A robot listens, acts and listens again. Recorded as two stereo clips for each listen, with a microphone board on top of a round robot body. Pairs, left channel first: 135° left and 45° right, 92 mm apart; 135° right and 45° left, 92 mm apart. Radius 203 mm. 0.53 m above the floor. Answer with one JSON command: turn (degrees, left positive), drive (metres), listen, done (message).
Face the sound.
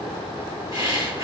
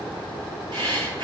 {"done": "Found it: breathing, straight ahead."}